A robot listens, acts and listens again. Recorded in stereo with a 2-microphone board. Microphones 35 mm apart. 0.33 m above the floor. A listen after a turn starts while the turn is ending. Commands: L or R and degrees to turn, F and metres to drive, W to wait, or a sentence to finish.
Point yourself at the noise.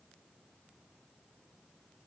W
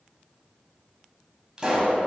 R20
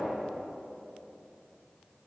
W
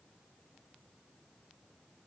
I heard a pop, but can't make it out now. It was about straight ahead or 140° right.